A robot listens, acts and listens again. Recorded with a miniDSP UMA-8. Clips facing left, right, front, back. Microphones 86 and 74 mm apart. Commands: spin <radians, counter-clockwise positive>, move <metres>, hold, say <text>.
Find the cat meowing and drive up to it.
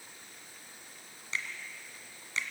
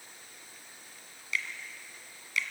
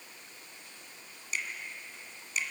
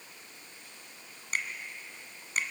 hold
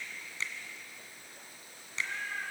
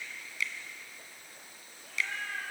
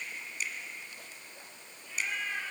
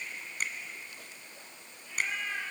spin -1.57
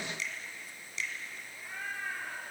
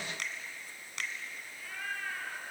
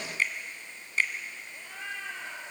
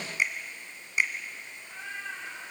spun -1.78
spin 0.26
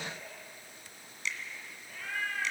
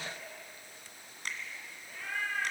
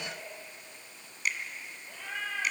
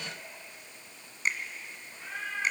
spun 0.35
move 1.0
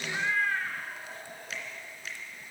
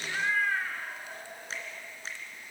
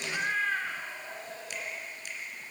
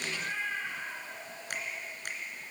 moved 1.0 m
spin -0.17
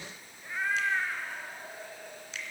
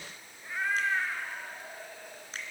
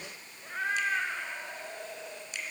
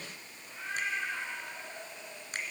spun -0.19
move 1.0
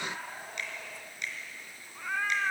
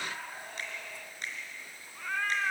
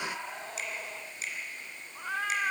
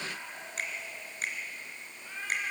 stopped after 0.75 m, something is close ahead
spin 0.17
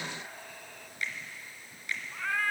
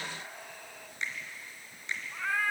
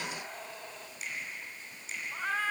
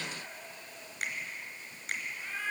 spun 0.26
say I am next to the cat meowing.